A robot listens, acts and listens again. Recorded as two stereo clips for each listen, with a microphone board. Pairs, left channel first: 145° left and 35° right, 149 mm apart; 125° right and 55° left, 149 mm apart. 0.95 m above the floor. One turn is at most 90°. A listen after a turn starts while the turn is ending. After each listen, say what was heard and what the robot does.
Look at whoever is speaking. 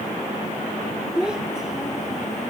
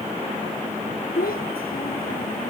The child speaking: 120° right. Turn 90° right.
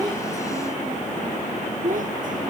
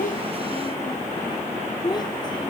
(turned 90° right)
The child speaking is now 60° right. Turn 60° right.
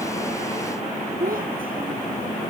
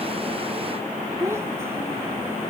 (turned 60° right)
The child speaking is now 15° right. Turn 15° right.
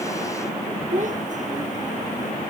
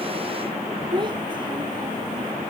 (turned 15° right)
Facing the child speaking.